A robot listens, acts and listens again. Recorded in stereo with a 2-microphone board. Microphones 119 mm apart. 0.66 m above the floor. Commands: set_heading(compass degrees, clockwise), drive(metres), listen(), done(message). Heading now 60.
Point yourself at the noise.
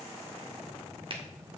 set_heading(110)
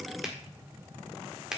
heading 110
done("Found it: a finger snap, straight ahead, 1 to 2 m away.")